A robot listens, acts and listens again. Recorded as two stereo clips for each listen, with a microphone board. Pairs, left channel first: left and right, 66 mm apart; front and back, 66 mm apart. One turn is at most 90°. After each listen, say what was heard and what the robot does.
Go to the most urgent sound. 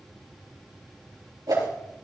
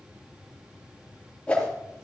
Keep listening.
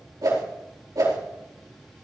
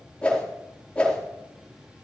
Keep listening.
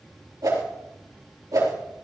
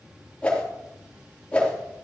I can't make out anything urgent to turn to.